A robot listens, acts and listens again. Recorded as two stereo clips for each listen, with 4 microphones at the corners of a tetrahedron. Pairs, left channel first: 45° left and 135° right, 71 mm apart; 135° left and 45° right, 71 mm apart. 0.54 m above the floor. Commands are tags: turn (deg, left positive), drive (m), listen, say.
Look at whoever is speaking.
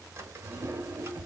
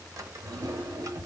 <listen/>
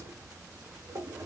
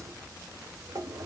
<listen/>
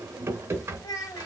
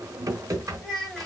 <turn deg="55"/>
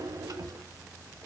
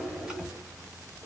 <listen/>
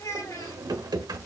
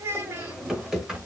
<turn deg="10"/>
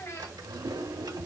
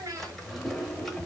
<say>Found it: a child speaking, straight ahead, 2 to 4 m away.</say>